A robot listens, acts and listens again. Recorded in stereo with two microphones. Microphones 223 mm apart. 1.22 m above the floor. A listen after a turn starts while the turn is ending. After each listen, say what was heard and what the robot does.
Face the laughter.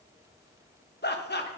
The laughter: about 50° left or 130° left. Turn 50° left.
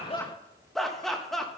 Facing the laughter, 1 to 2 m away.